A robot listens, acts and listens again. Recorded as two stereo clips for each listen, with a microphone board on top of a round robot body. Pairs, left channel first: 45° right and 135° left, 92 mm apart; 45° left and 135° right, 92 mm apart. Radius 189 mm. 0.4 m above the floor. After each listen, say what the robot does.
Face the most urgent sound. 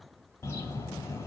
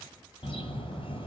Keep listening.
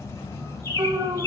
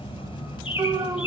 Turn 180° left.
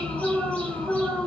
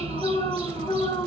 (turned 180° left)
Turn 40° left.
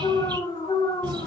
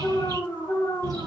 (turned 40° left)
Turn 20° right.
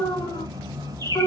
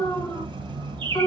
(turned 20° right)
Turn 10° right.
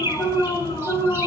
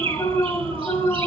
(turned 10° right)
Facing the alarm.